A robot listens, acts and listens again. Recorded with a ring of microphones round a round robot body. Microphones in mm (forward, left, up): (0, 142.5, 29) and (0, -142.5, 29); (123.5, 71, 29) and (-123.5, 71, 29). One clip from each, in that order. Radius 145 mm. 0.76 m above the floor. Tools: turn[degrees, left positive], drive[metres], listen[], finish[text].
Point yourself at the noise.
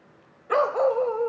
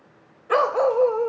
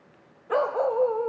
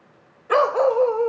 Thought: The dog barking: 165° right.
Action: turn[-165]
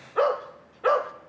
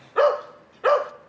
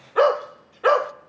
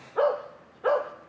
Thought: The dog barking is now 20° right.
Action: turn[-20]
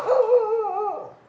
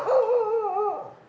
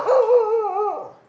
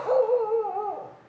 Action: finish[Found it: a dog barking, straight ahead.]